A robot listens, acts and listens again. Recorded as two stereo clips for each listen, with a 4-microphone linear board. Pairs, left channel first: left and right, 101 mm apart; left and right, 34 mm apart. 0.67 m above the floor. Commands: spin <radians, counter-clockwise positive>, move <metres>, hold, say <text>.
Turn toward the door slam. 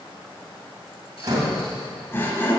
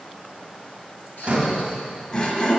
spin -0.70
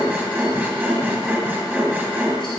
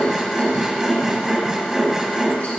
hold
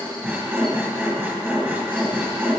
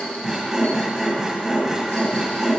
say I heard a door slam, but can't make it out now. It was about straight ahead or 100° right.